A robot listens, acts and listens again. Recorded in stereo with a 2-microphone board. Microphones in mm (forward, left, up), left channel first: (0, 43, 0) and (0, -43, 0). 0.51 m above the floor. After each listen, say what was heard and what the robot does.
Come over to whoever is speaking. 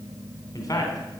The man speaking: about 45° left or 135° left. Turn 45° left.
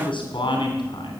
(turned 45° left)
So it is at 85° left. Turn 85° left.
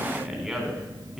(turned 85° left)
Drive 1.0 m forward.
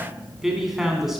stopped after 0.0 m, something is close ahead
Something is in my way. I am facing the man speaking but have not reached it.